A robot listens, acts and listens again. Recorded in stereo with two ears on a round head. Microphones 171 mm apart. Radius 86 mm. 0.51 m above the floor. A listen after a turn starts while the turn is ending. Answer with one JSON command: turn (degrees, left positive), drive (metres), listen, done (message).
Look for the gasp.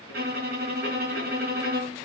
{"listen": true}
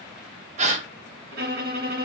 {"turn": -40}
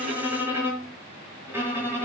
{"listen": true}
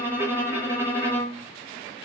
{"done": "I heard a gasp, but can't make it out now. It was about straight ahead or 100° right."}